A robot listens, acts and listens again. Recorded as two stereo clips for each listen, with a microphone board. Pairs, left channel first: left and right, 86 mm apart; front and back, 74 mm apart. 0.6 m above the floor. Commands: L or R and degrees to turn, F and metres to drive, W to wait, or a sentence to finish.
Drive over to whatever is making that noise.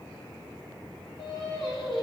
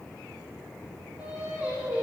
L110
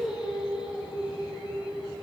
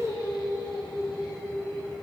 R10
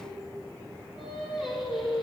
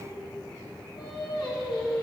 F1.0
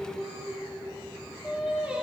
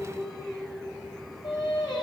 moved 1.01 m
R10
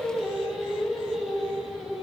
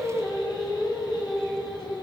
F1.0
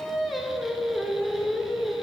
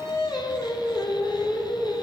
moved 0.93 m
F1.0
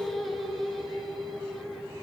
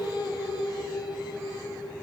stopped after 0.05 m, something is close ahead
Arrived at the singing, straight ahead.